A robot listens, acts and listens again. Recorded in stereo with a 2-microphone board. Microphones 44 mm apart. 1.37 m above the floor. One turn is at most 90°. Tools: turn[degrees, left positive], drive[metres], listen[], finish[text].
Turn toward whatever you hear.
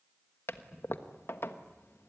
Thought: The toilet flushing: about 70° left or 110° left.
Action: turn[70]
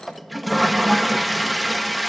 Action: finish[Facing the toilet flushing.]